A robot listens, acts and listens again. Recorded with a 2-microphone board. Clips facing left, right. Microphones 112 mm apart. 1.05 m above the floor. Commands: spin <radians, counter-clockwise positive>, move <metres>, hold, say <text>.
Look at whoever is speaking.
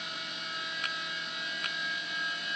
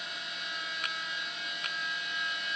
hold
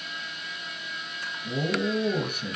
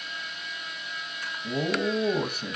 spin -0.52
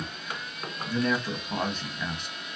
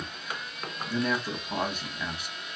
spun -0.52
say Facing the man speaking.